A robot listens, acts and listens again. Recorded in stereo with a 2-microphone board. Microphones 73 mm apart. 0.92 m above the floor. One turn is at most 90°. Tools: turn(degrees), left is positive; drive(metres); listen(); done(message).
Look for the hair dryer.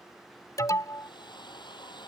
turn(degrees=90)
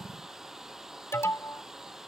done("Found it: a hair dryer, straight ahead.")